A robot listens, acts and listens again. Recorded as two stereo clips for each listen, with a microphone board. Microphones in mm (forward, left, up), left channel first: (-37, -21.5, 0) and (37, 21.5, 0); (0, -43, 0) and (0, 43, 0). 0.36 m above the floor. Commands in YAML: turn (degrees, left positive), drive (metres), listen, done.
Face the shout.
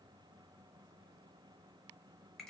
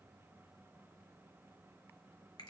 listen: true
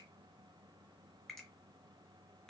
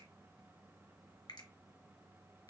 listen: true
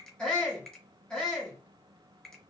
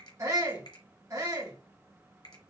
turn: 130
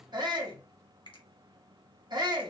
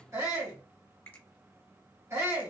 turn: 40
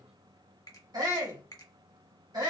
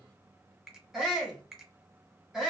done: "Found it: a shout, straight ahead, 1 to 2 m away."